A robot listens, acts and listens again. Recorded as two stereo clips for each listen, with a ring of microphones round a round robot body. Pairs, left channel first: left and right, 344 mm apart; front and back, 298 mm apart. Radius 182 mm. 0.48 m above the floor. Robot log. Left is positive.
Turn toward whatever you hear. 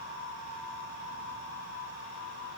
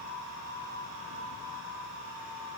cmd idle
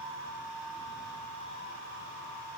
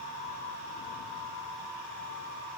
cmd idle
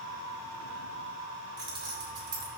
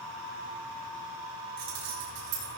note: The keys jangling: 165° right.
cmd yaw -165
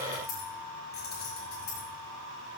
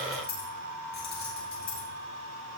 note: The keys jangling is now 25° left.
cmd yaw +25
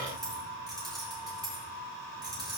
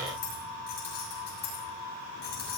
note: The keys jangling is now 10° right.
cmd yaw -10
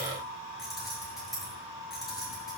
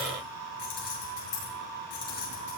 end: Found it: keys jangling, straight ahead, over 4 m away.